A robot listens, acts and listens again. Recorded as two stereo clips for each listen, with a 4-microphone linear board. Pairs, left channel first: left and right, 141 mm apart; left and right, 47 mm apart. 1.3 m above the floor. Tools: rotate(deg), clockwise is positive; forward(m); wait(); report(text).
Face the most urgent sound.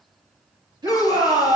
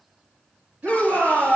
rotate(30)
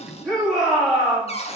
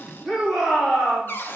report("Found it: a shout, straight ahead.")